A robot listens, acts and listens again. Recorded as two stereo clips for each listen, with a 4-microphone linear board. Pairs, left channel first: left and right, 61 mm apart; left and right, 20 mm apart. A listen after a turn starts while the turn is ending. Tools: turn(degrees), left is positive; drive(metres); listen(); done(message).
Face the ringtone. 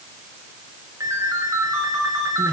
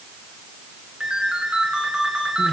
turn(degrees=-60)
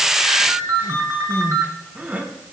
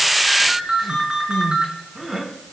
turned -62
turn(degrees=-55)
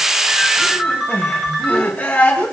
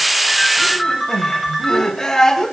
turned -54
done("Found it: a ringtone, straight ahead, 2 to 4 m away.")